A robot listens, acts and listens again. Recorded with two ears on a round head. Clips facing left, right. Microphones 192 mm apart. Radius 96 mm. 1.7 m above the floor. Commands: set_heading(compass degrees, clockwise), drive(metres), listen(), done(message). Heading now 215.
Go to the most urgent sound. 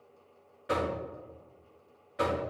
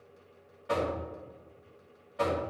listen()
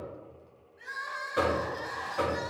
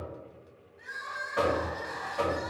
set_heading(160)
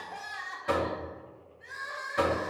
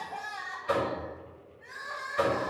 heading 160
set_heading(100)
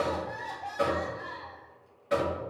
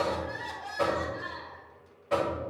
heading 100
set_heading(115)
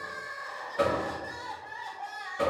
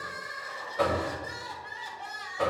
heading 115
drive(1.0)
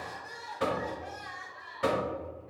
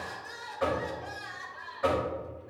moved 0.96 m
set_heading(130)
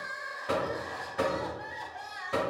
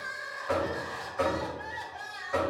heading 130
drive(1.0)
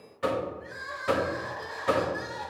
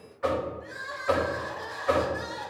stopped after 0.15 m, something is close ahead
done("I am next to the crying.")